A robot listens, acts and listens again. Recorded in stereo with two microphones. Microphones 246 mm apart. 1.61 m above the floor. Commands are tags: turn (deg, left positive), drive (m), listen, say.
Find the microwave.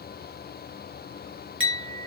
<listen/>
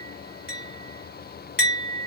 <listen/>
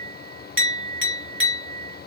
<say>I can't make out a microwave to turn to.</say>